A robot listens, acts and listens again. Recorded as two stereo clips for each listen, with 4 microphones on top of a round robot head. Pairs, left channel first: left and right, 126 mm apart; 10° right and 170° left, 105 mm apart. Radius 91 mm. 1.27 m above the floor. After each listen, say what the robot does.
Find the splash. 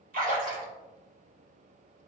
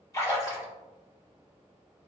Turn 75° right.
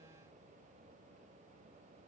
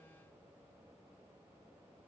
Facing where the splash came from. I can't hear it now.